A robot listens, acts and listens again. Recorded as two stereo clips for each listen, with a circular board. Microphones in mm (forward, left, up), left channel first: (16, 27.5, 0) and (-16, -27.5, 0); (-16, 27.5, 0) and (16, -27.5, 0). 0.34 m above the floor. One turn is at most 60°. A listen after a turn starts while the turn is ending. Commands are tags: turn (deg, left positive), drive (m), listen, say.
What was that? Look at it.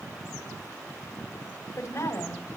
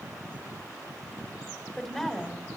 <turn deg="40"/>
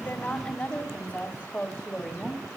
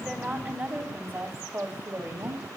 <turn deg="-20"/>
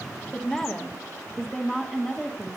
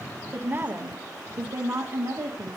<turn deg="-50"/>
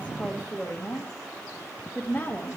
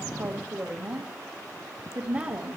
<turn deg="-15"/>
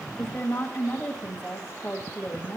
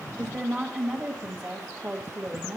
<say>Found it: a woman speaking, straight ahead, 1 to 2 m away.</say>